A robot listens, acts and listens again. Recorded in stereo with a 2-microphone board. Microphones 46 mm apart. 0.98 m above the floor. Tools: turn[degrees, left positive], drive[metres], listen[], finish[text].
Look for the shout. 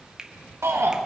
Thought: The shout: about 75° right or 105° right.
Action: turn[-75]
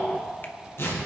Action: listen[]
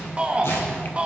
Thought: So it is at 25° right.
Action: turn[-25]
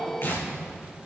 Action: listen[]
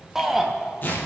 Thought: The shout is now 10° right.
Action: turn[-10]
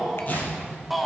Action: finish[Found it: a shout, straight ahead.]